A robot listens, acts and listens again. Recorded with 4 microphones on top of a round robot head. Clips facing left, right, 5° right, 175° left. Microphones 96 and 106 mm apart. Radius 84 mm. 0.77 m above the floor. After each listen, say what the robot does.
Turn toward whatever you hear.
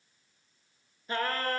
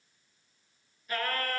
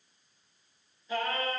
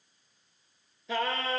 Turn 155° left.
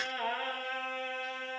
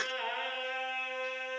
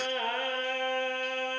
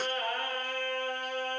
Turn 10° left.
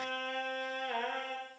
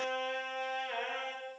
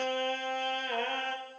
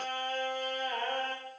Found it: singing, straight ahead.